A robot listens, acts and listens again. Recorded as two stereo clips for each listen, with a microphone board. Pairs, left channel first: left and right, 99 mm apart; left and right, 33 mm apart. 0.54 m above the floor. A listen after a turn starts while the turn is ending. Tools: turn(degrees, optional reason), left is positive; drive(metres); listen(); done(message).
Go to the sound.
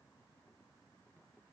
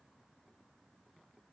listen()
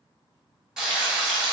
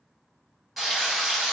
turn(degrees=-30)
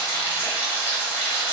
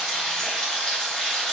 turn(degrees=25, reason="So it is at 25° left.")
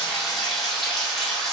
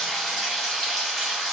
drive(metres=1.0)
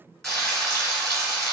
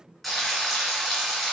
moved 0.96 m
drive(metres=1.0)
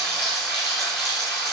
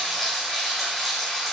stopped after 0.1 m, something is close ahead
done("I am next to the frying.")